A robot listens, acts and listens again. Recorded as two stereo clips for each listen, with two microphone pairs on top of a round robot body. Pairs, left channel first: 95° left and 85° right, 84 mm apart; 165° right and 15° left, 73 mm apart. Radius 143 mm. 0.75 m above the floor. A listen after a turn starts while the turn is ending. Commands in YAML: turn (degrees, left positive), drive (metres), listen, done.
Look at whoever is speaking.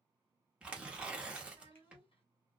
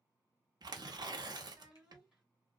turn: 110
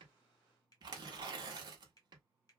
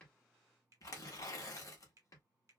listen: true
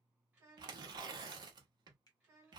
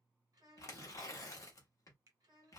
done: "Facing the child speaking."